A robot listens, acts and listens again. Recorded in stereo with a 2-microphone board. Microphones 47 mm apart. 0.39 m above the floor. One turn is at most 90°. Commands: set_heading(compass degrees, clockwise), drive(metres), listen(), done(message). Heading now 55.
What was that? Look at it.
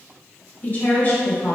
set_heading(15)
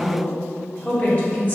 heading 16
set_heading(341)
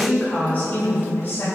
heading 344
set_heading(304)
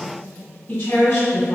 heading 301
set_heading(276)
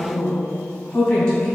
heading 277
set_heading(267)
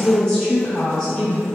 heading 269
done("Facing the woman speaking, 2 to 4 m away.")